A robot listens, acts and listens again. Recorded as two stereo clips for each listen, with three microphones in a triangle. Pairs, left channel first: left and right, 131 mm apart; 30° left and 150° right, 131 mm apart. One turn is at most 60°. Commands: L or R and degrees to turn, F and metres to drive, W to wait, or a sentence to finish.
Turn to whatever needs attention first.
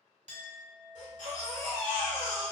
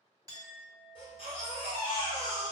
L60
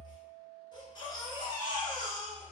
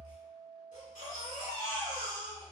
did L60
L35
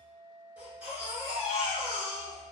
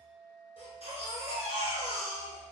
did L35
R15
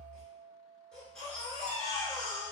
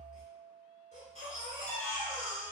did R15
Found it: a baby crying, straight ahead, 1 to 2 m away.